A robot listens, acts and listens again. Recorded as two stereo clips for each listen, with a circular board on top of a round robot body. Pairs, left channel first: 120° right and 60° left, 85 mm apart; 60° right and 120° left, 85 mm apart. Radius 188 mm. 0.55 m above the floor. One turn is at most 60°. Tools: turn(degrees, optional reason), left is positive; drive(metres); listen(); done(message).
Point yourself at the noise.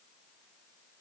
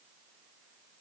listen()
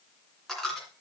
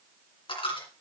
turn(degrees=-35, reason="The dropped coin: 35° right.")
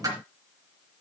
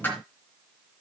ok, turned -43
turn(degrees=10, reason="The dropped coin is now 10° left.")
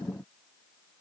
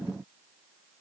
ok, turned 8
done("I heard a dropped coin from this way, but can't make it out now.")